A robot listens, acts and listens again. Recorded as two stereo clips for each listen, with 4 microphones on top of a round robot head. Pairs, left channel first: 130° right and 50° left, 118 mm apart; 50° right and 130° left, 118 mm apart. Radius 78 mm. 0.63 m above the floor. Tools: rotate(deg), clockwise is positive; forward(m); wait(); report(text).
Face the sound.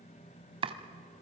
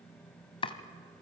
report("Found it: chopping, straight ahead, 1 to 2 m away.")